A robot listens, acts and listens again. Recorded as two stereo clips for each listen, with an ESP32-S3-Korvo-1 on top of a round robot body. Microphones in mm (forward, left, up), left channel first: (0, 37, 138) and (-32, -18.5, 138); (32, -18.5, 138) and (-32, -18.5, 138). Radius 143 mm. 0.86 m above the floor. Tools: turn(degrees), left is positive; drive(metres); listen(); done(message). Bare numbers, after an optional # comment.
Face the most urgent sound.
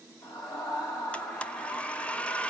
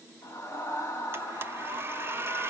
# The scream: 50° left.
turn(50)
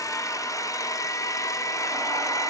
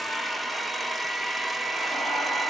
listen()
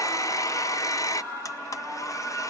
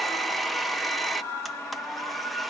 # The scream is now 10° left.
turn(10)
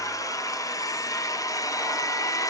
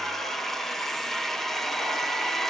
listen()
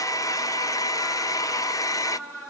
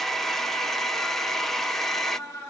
done("Facing the scream.")